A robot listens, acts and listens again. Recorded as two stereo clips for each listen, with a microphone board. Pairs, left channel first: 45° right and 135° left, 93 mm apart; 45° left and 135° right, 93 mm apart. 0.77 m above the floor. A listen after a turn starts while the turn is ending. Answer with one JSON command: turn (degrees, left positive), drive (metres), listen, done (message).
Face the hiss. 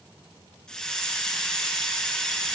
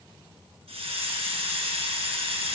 {"turn": -125}
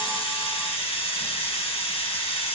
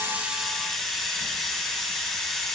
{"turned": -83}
{"turn": -40}
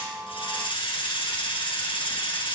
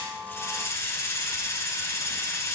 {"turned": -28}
{"turn": -15}
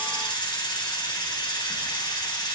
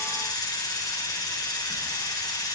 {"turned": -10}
{"done": "Facing the hiss."}